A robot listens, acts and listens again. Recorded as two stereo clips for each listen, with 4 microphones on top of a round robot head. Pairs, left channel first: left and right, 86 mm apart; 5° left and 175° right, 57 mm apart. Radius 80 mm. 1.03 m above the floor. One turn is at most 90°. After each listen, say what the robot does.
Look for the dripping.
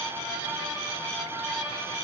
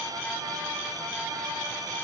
Keep listening.
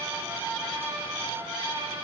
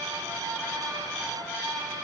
Keep listening.
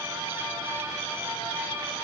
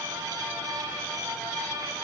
I can't make out dripping.